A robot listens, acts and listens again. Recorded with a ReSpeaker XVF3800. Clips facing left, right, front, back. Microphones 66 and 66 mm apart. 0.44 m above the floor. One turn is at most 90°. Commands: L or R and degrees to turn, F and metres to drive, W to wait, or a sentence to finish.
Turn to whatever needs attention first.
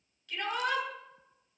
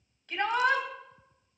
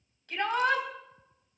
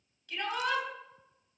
R35
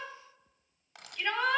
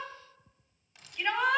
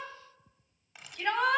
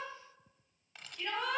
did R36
Found it: a shout, straight ahead, 2 to 4 m away.